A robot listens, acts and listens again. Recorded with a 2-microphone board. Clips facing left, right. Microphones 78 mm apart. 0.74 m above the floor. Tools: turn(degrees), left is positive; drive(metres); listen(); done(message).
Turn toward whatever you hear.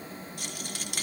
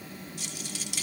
turn(degrees=50)
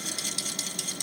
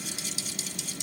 turn(degrees=70)
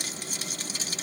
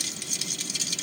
turn(degrees=40)
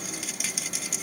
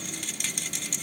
done("Found it: a rattle, straight ahead.")